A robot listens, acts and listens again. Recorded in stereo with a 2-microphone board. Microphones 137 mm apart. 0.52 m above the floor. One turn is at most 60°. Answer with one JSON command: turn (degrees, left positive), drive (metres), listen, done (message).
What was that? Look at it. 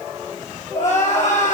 {"turn": 60}
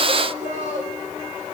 {"turn": 60}
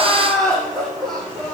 {"done": "Found it: crying, straight ahead, over 4 m away."}